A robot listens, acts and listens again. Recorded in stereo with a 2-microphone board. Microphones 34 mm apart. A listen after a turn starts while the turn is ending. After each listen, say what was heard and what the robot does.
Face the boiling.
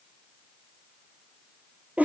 Keep listening.
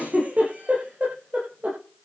Keep listening.
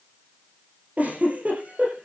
I can't make out boiling to turn to.